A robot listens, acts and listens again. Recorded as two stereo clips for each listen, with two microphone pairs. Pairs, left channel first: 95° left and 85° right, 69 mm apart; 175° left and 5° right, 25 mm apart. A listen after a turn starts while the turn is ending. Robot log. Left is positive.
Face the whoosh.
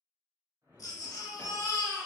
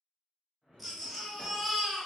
note: The whoosh: 60° right.
cmd yaw -60
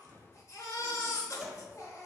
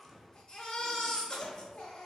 note: The whoosh is now 25° right.
cmd yaw -25
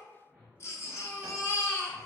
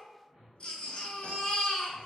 note: The whoosh is now 15° right.
cmd yaw -15
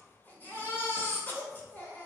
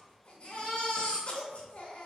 cmd idle
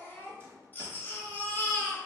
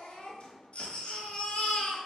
cmd idle
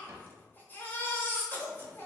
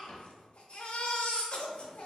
end: Facing where the whoosh came from. I can't hear it now.